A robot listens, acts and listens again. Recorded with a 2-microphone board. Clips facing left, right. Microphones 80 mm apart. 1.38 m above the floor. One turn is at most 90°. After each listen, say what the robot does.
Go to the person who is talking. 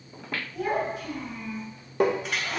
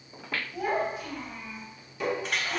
Turn 25° right.
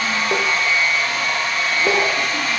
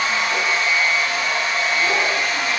Keep listening.
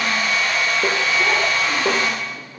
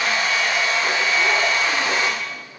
Keep listening.
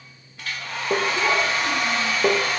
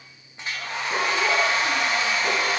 I heard a child speaking, but can't make it out now. It was about straight ahead or 130° right. I did not reach it.